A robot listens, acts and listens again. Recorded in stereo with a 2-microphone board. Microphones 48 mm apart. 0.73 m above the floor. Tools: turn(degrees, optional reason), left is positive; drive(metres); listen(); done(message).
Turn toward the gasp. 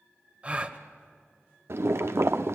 turn(degrees=-30, reason="The gasp: about 30° right or 150° right.")
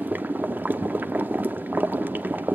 listen()
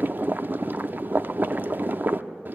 done("I heard a gasp, but can't make it out now. It was about straight ahead or 120° right.")